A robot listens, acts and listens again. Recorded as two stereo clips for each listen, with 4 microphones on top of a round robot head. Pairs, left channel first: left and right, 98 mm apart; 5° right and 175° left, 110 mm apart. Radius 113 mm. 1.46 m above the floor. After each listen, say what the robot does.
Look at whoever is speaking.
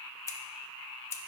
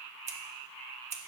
Keep listening.
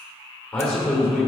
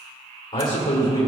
Turn 15° left.
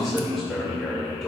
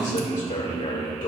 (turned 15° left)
Facing the man speaking, 1 to 2 m away.